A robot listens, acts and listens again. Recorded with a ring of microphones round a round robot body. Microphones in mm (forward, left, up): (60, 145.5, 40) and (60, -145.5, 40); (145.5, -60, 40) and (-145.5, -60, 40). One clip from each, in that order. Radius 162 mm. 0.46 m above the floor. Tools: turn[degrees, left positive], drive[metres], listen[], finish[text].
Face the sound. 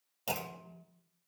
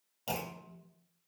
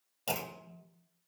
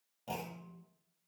Thought: The clunk: 25° left.
Action: turn[25]
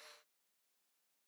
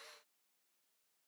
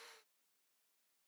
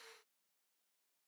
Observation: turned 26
Action: finish[I heard a clunk from this way, but can't make it out now.]